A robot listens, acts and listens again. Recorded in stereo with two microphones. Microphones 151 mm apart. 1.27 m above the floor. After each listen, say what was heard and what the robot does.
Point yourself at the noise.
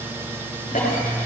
The cough: about 65° left or 115° left. Turn 65° left.
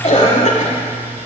So it is at 50° left. Turn 50° left.
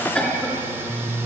Found it: a cough, straight ahead, 2 to 4 m away.